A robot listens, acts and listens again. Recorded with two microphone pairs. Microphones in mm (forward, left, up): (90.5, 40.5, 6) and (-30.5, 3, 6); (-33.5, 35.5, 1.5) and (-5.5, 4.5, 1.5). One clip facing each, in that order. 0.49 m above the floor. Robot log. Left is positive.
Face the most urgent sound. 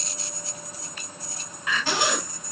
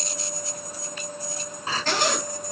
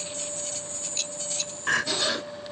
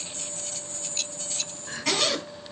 note: The crying: 140° left.
cmd yaw +140
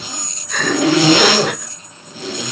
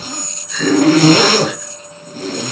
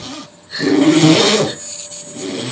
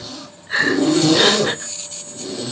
end: Facing the crying.